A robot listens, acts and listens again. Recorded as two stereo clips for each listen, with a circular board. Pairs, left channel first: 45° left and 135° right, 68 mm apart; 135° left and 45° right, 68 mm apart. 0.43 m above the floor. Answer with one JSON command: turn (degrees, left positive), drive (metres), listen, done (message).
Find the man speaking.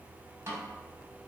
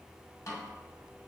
{"listen": true}
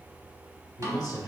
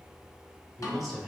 {"turn": 35}
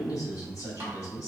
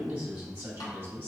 {"turn": 10}
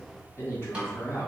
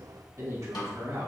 {"turn": -10}
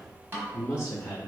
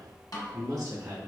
{"done": "Facing the man speaking."}